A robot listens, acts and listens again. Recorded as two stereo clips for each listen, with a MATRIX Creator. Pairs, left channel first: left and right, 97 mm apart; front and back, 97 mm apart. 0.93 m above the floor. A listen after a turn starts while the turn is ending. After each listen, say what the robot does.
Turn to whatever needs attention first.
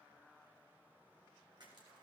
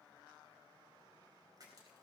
Keep listening.
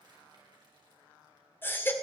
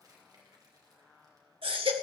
Turn 155° left.
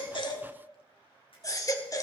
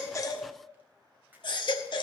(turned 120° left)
Turn 35° left.
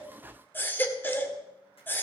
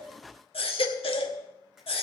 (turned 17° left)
Turn 20° left.
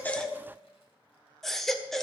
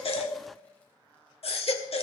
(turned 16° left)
Facing the baby crying, 1 to 2 m away.